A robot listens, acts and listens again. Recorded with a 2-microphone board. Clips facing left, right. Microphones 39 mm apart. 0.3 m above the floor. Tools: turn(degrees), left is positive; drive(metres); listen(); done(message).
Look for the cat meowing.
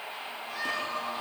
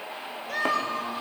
turn(degrees=-70)
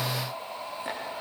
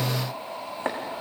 listen()
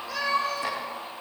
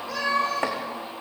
done("Found it: a cat meowing, straight ahead, over 4 m away.")